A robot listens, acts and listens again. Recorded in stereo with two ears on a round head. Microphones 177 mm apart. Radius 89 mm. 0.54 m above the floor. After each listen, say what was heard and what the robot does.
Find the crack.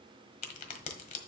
The crack: about 40° left or 140° left. Turn 40° left.
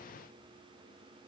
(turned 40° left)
Keep listening.
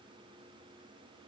I heard a crack, but can't make it out now. It was about straight ahead or 100° left.